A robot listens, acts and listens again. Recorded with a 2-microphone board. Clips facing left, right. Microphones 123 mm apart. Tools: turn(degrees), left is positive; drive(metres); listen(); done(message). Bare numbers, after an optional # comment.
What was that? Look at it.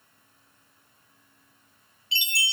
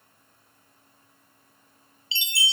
# The chime: about 55° left or 125° left.
turn(55)
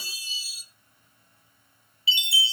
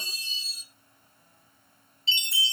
# So it is at 10° left.
turn(10)
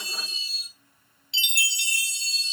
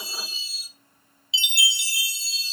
done("Facing the chime.")